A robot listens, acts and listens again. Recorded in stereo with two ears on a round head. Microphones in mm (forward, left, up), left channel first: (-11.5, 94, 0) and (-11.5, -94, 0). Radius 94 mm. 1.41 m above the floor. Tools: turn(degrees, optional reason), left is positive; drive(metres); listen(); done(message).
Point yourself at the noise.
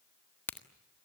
turn(degrees=30)
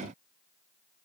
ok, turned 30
listen()
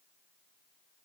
done("I heard a crack, but can't make it out now. It was about 20° right or 140° left.")